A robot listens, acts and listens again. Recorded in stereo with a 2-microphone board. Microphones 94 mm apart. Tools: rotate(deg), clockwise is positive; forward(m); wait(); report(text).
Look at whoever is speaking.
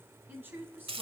rotate(20)
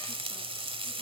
wait()
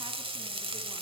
wait()
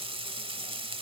report("I heard a woman speaking, but can't make it out now. It was about straight ahead or 140° right.")